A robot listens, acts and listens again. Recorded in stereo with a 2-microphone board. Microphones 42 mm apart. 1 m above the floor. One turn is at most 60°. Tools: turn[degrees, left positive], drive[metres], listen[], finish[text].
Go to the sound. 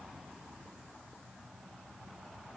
Action: listen[]
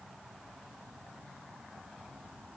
Action: listen[]
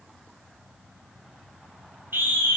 Thought: The scream: about 65° right or 115° right.
Action: turn[-60]
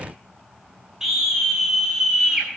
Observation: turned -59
Thought: So it is at 10° right.
Action: turn[-10]
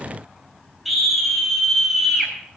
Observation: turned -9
Action: drive[1.0]
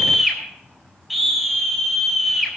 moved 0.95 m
Action: drive[1.0]
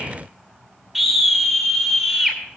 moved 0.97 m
Action: drive[1.0]
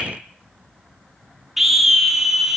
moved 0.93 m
Action: drive[1.0]
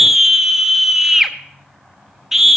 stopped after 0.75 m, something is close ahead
Action: finish[Arrived at the scream, straight ahead.]